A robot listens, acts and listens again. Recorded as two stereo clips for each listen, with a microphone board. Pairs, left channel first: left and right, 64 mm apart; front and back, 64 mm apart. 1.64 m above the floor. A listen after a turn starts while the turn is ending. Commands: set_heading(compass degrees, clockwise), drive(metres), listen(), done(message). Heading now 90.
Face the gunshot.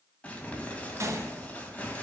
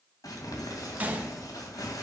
set_heading(210)
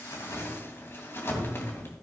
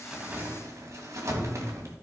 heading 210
done("I heard a gunshot from this way, but can't make it out now.")